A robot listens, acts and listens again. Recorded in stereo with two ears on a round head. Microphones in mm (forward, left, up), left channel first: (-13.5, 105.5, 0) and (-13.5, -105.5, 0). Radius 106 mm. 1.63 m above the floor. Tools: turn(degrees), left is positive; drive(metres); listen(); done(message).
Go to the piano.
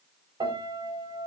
turn(degrees=-20)
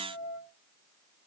drive(metres=1.0)
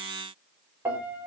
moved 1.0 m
turn(degrees=-10)
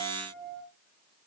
drive(metres=1.0)
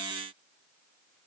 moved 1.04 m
listen()
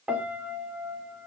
drive(metres=1.0)
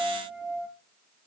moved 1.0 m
drive(metres=1.0)
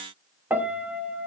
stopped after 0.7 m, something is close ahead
turn(degrees=-10)
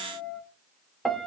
done("Arrived at the piano, straight ahead.")